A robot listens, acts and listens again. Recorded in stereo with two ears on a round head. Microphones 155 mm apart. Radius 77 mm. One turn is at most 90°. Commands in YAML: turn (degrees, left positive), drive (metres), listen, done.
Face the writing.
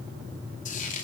listen: true
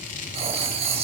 turn: -35
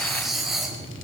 done: "Facing the writing."